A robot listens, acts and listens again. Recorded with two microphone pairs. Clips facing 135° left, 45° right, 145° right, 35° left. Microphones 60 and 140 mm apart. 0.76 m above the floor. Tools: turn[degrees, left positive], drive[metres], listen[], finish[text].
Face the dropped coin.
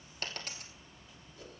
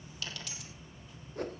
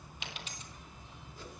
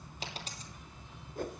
Thought: The dropped coin: 85° left.
Action: turn[85]
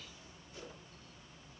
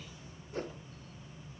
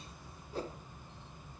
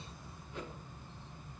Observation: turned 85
Action: finish[Facing where the dropped coin came from. I can't hear it now.]